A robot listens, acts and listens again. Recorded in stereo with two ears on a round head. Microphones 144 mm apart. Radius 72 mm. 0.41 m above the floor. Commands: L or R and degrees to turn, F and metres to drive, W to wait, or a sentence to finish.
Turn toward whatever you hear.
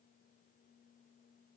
W
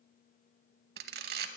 R65
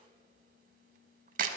R50
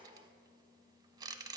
R25
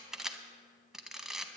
Found it: a camera shutter, straight ahead.